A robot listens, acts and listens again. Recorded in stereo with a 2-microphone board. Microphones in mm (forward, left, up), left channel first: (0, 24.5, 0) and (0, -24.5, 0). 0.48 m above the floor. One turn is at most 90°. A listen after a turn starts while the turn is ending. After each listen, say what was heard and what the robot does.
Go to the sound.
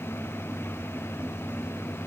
Keep listening.
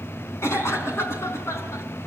The cough: about 65° left or 115° left. Turn 65° left.
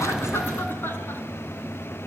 Keep listening.
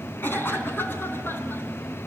So it is at 45° left. Turn 45° left.
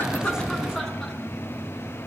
Keep listening.
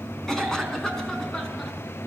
Drive 1.0 m forward.
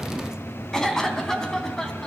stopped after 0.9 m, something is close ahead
The cough is now 10° left. Turn 10° left.
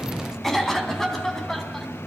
Something is in my way. I am facing the cough but have not reached it.